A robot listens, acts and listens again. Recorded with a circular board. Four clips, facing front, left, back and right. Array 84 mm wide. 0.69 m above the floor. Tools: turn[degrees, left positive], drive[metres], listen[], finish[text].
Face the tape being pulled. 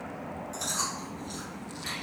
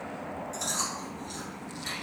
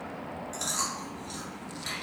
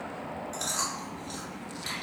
Action: listen[]
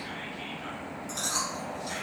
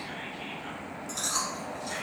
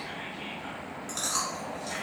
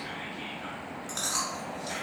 Action: listen[]
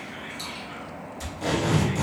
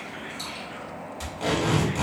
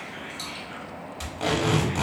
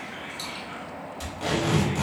Thought: The tape being pulled: straight behind.
Action: turn[180]
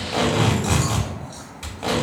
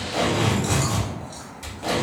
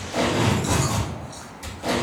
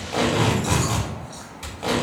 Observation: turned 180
Thought: The tape being pulled is now 20° right.
Action: turn[-20]
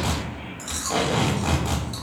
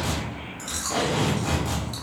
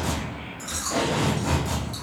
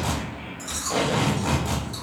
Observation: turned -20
Action: finish[Facing the tape being pulled, under 1 m away.]